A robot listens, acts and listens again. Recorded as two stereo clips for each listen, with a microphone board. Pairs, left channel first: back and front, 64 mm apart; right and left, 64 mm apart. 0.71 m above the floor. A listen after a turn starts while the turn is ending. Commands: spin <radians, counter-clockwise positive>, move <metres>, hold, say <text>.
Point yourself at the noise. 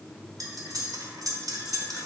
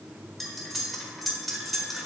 say Found it: cutlery clinking, straight ahead.